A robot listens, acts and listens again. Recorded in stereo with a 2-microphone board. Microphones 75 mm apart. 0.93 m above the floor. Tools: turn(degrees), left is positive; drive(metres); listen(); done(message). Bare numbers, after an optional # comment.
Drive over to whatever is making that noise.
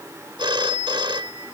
turn(-90)
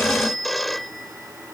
drive(1.0)
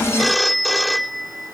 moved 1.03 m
drive(1.0)
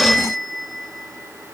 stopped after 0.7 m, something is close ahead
done("I am next to the phone ringing.")